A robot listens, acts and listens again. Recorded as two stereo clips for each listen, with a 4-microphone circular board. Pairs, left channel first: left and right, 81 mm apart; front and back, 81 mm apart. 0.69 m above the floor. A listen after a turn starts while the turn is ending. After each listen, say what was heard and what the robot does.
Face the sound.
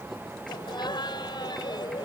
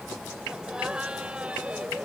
The laughter: 110° left. Turn 110° left.
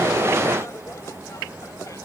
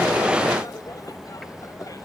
Keep listening.
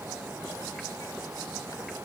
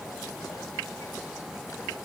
Keep listening.
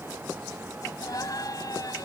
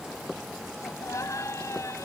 The laughter is now 50° left. Turn 50° left.
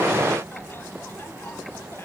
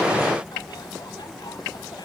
Keep listening.
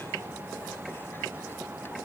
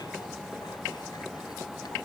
Keep listening.
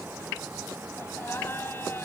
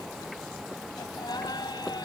The laughter is now 30° left. Turn 30° left.
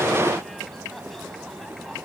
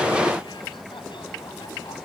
Keep listening.
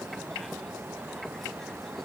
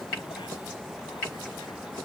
Keep listening.
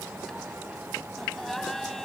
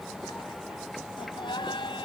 Facing the laughter.